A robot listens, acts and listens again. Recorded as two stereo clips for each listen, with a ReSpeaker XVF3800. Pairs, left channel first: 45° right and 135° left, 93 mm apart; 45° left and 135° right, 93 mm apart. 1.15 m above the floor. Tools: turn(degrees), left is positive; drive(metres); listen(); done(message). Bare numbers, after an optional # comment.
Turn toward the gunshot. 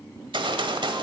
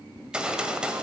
# The gunshot: 145° left.
turn(145)
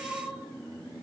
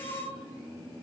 done("I heard a gunshot from this way, but can't make it out now.")